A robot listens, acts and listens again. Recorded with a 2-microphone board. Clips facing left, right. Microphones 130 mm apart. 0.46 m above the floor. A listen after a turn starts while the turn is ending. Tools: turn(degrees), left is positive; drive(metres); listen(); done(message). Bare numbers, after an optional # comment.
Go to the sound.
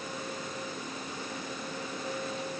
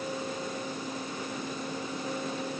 listen()
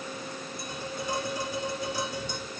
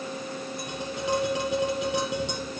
turn(-90)
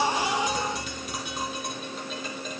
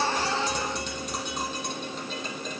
drive(1.0)
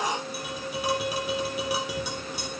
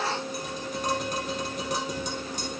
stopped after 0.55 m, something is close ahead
# The tapping is now 10° left.
turn(10)
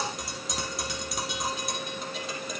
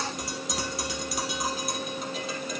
done("Blocked. The tapping is further on, straight ahead.")